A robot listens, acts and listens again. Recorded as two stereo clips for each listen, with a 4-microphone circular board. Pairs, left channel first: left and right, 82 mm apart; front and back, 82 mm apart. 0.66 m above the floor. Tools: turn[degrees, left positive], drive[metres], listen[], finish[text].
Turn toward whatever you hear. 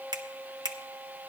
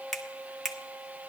Thought: The finger snap: 90° right.
Action: turn[-90]
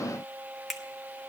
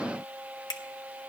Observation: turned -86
Action: finish[Found it: a finger snap, straight ahead.]